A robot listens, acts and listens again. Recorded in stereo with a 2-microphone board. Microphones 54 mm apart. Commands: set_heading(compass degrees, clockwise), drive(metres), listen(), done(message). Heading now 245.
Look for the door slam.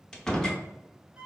set_heading(215)
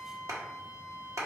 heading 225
listen()
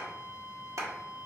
done("I heard a door slam, but can't make it out now. It was about 10° right or 150° left.")